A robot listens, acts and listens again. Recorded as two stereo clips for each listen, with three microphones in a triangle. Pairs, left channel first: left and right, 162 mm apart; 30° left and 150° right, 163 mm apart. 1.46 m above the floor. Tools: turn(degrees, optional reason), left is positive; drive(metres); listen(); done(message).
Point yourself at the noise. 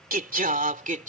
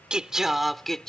turn(degrees=-55, reason="The singing: 55° right.")
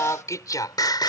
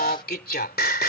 turn(degrees=25, reason="The singing is now 25° left.")
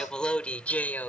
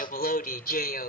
turn(degrees=10, reason="The singing is now 10° left.")
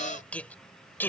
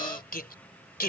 turn(degrees=10, reason="The singing is now 10° left.")
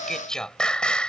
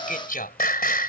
done("Found it: singing, straight ahead.")